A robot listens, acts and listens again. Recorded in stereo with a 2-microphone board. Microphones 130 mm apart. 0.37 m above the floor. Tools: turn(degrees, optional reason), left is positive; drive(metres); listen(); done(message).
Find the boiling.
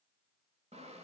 listen()
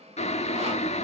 turn(degrees=55, reason="The boiling: about 55° left or 125° left.")
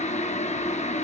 turn(degrees=65, reason="So it is at 65° left.")
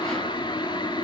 turn(degrees=35, reason="The boiling is now 35° left.")
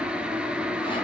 done("Facing the boiling, under 1 m away.")